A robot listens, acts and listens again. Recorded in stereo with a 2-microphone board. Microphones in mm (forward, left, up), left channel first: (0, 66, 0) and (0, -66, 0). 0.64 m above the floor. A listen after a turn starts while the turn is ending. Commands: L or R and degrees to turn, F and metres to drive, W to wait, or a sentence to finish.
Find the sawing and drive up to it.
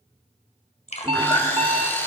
L15
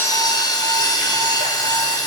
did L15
L150
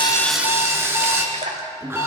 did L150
R20
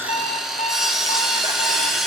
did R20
F1.0
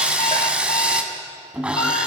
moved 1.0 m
R10
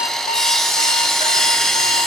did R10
F1.0
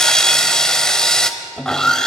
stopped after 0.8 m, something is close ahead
Arrived at the sawing, straight ahead.